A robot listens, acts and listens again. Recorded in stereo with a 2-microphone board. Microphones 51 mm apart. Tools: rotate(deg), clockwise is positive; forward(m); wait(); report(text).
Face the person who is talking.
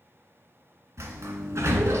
wait()
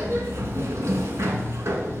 wait()
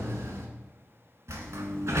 report("I can't make out anyone speaking to turn to.")